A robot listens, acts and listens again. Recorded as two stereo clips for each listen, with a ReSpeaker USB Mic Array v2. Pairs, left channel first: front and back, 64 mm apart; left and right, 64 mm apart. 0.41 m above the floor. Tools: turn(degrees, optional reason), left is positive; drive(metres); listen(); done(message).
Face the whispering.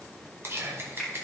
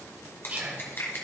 turn(degrees=-145, reason="The whispering: 145° right.")
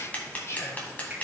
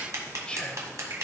turn(degrees=20, reason="The whispering is now 20° left.")
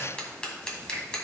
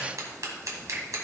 listen()
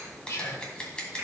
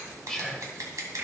done("Facing the whispering, 1 to 2 m away.")